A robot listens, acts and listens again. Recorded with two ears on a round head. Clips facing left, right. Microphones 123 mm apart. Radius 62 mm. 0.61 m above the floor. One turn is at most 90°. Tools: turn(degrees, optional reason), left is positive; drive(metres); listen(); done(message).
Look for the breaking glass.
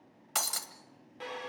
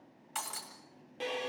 turn(degrees=90)
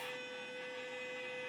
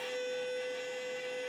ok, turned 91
done("I heard breaking glass from this way, but can't make it out now.")